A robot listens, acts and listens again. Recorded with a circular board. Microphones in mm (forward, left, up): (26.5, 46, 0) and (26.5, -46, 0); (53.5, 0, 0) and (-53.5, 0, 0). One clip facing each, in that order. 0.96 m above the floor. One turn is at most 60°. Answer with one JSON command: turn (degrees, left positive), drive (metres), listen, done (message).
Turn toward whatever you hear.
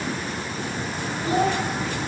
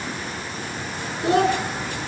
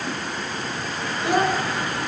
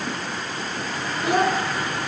{"turn": -60}
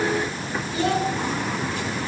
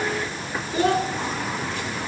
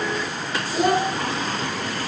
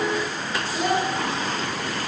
{"turn": -50}
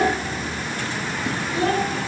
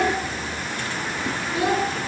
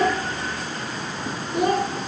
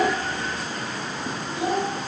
{"turn": -20}
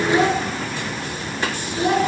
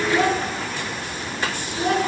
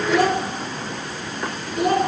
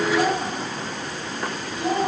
{"done": "Found it: a child speaking, straight ahead, 2 to 4 m away."}